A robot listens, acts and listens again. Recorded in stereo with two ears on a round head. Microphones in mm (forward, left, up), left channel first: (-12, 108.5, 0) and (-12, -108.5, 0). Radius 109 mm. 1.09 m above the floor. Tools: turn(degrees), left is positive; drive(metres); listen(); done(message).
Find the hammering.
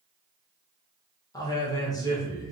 listen()
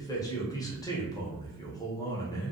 listen()
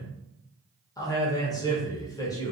done("I can't make out hammering to turn to.")